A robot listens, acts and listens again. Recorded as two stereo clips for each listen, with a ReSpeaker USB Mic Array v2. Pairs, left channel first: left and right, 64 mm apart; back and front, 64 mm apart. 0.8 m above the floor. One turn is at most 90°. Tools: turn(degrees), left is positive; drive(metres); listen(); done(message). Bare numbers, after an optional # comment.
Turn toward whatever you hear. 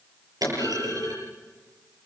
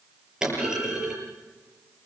# The clunk: 80° right.
turn(-80)
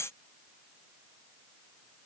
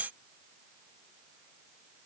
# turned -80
done("I heard a clunk from this way, but can't make it out now.")